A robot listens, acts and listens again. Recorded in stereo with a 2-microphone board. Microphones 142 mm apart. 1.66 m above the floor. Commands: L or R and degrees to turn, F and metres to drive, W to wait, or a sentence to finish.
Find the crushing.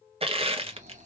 R40
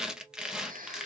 Facing the crushing.